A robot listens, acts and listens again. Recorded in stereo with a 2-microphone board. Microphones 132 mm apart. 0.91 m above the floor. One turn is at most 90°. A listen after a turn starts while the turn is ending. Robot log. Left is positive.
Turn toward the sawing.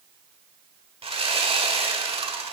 note: The sawing: about 45° right or 135° right.
cmd yaw -45
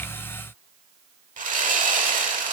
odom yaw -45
note: So it is at 85° right.
cmd yaw -85
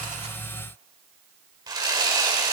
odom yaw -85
note: The sawing is now 30° right.
cmd yaw -30
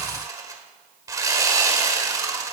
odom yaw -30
note: The sawing is now 25° right.
cmd yaw -25
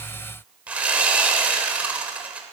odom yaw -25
note: The sawing is now 10° right.
cmd yaw -10
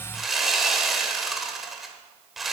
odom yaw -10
end: Facing the sawing, 1 to 2 m away.